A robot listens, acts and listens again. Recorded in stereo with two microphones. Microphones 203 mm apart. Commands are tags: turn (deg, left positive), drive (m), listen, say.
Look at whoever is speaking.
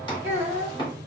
<turn deg="-30"/>
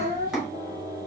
<turn deg="-140"/>
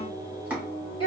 <turn deg="30"/>
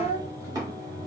<turn deg="20"/>
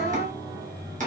<listen/>
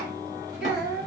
<say>Found it: a child speaking, straight ahead, 1 to 2 m away.</say>